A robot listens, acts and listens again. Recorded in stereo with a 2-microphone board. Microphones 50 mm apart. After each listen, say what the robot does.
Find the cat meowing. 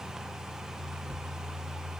Keep listening.
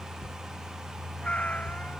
Turn 25° left.
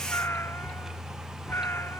Turn 130° left.
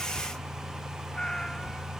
Turn 15° left.
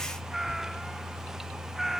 Found it: a cat meowing, straight ahead.